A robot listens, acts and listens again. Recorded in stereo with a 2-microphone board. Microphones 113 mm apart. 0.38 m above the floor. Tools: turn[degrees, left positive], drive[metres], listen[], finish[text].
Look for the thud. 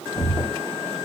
Thought: The thud: about 35° left or 145° left.
Action: turn[35]
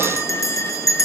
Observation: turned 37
Action: listen[]
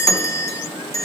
Action: finish[I heard a thud, but can't make it out now. It was about 5° right or 110° left.]